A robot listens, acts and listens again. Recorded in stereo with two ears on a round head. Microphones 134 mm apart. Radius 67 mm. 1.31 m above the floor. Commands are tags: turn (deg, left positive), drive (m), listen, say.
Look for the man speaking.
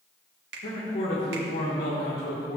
<turn deg="90"/>
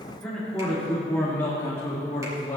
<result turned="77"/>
<turn deg="25"/>
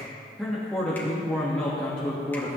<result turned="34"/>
<turn deg="10"/>
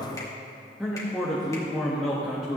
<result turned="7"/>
<say>Facing the man speaking, 1 to 2 m away.</say>